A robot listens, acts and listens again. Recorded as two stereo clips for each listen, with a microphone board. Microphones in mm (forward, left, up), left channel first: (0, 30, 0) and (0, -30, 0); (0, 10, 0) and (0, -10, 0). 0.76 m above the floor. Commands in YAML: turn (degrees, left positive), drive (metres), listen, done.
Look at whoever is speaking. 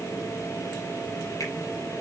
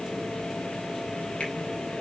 listen: true
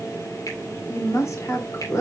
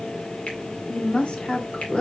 turn: 55
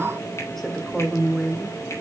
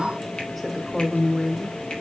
done: "Facing the woman speaking."